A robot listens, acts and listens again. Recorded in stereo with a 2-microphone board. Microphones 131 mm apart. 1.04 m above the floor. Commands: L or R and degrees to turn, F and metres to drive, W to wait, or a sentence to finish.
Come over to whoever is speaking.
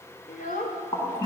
L90
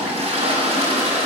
W
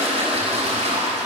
W
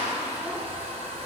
Facing where the child speaking came from. I can't hear it now. I did not reach it.